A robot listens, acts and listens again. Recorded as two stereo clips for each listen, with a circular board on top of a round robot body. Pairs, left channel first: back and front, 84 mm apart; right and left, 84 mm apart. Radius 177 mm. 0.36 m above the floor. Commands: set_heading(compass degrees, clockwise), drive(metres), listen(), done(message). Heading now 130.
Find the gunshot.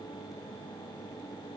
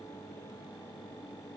listen()
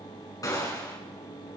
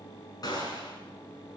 set_heading(260)
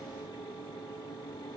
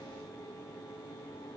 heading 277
set_heading(262)
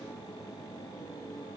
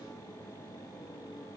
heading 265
done("I heard a gunshot from this way, but can't make it out now.")